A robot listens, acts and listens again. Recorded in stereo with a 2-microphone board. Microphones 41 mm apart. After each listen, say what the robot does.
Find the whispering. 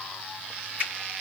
Keep listening.
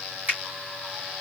Keep listening.
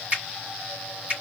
I can't make out whispering, only a finger snap.